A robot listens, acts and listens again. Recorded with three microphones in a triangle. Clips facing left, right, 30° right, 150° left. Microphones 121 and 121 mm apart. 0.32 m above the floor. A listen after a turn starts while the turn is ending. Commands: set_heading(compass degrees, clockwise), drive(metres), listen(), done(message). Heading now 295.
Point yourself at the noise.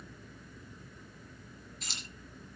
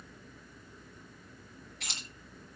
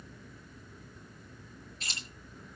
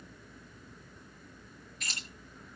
set_heading(20)
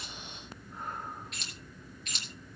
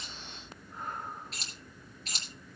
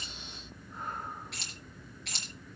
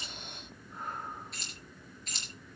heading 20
set_heading(55)
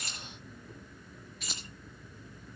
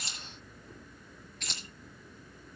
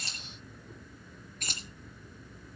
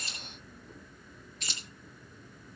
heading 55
set_heading(45)
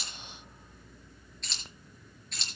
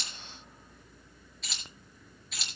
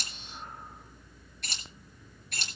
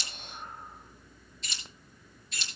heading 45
done("Found it: keys jangling, straight ahead.")